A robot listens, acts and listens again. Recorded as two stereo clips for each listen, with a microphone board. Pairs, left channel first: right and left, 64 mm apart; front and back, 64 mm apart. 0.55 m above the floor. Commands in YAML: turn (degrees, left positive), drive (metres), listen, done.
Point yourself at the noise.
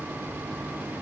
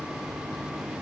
listen: true
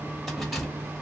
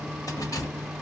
done: "Facing the keys jangling, 1 to 2 m away."